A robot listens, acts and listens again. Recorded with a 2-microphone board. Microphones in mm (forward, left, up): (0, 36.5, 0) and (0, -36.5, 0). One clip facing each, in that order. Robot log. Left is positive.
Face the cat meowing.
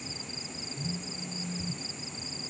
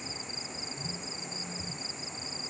cmd idle
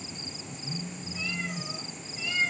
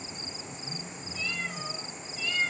cmd yaw +30
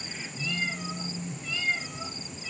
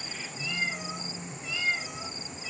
note: So it is at 10° right.
cmd yaw -10
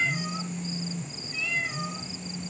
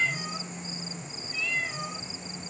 end: Facing the cat meowing.